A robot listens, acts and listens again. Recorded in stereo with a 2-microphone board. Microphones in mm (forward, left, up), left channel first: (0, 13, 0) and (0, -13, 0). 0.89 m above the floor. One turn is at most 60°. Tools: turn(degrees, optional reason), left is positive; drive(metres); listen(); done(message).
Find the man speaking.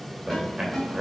turn(degrees=-30)
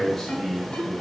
turn(degrees=20, reason="So it is at 20° left.")
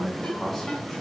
done("Found it: a man speaking, straight ahead.")